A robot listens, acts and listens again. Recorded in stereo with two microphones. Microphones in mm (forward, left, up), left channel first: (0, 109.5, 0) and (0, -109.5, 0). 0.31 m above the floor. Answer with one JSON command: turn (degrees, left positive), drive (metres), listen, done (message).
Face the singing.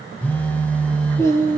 {"turn": 30}
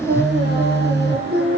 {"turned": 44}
{"turn": -55}
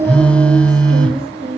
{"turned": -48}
{"turn": -30}
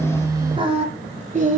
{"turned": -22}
{"turn": -40}
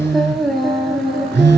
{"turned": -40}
{"done": "Found it: singing, straight ahead, 1 to 2 m away."}